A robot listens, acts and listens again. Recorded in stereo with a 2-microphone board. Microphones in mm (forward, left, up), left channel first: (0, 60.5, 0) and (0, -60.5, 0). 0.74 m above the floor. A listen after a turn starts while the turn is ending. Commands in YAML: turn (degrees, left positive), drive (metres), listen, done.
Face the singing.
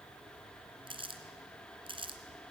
listen: true
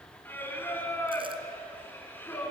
turn: 15
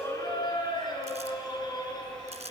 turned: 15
turn: 35
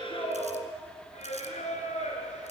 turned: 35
turn: 110
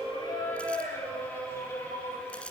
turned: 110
turn: 20
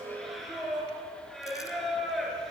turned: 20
done: "Found it: singing, straight ahead, over 4 m away."